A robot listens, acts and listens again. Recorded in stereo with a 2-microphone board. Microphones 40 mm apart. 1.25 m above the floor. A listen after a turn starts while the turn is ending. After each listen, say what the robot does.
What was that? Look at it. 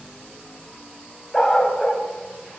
Turn 30° left.
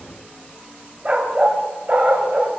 Turn 45° right.
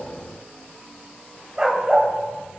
Turn 20° right.
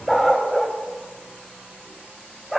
Found it: a dog barking, straight ahead.